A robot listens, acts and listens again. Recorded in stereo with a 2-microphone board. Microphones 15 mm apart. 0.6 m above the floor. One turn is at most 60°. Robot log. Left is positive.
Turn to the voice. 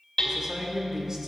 note: The man speaking: about 45° right or 135° right.
cmd yaw -45
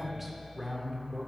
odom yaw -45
note: So it is at 10° right.
cmd yaw -10
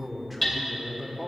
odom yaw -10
end: Facing the man speaking.